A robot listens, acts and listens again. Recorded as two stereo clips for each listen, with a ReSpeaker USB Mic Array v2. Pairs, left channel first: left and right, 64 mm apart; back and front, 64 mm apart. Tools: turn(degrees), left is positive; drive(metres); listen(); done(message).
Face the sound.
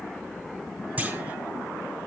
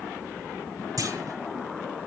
turn(degrees=-25)
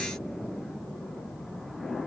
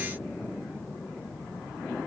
done("Facing where the clunk came from. I can't hear it now.")